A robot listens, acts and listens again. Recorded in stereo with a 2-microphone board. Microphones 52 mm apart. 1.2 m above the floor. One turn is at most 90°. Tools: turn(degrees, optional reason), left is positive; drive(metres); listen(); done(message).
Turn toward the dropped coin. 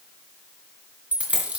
turn(degrees=-25, reason="The dropped coin: about 25° right or 155° right.")
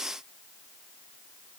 listen()
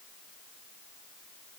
done("I heard a dropped coin, but can't make it out now. It was about straight ahead or 130° right.")